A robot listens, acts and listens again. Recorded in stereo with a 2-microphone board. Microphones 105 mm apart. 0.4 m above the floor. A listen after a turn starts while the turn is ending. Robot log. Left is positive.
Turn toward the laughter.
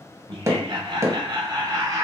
note: The laughter: about 35° right or 145° right.
cmd yaw -35
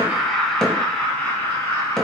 note: So it is at 25° left.
cmd yaw +25
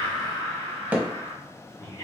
note: The laughter is now 25° left.
cmd yaw +25
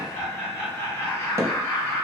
note: The laughter is now 15° left.
cmd yaw +15
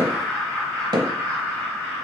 end: Facing the laughter.